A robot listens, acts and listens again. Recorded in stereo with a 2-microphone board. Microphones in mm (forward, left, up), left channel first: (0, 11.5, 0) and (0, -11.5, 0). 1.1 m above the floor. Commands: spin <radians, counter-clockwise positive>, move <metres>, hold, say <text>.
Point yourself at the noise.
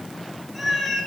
spin 0.52
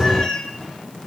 spin 2.62
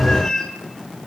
spin 0.52
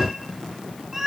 spin -0.26
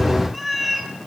say Found it: a cat meowing, straight ahead.